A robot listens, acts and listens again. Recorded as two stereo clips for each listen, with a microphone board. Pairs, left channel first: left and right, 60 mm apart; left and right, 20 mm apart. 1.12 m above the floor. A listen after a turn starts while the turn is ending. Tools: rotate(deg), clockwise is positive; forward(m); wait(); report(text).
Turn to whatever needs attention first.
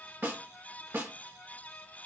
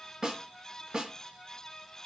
wait()
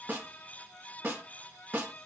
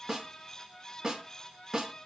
wait()
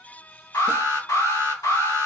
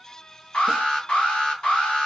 rotate(-75)
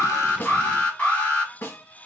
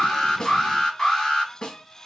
rotate(-30)
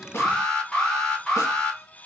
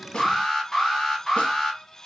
rotate(-10)
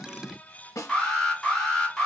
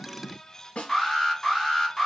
report("Found it: an alarm, straight ahead.")